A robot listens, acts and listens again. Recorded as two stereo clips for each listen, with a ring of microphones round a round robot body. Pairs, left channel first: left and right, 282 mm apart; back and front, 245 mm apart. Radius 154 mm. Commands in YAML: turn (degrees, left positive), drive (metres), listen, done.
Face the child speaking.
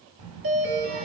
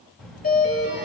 turn: -90
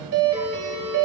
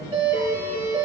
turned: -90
listen: true
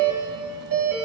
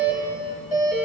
listen: true
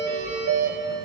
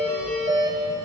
done: "Found it: a child speaking, straight ahead."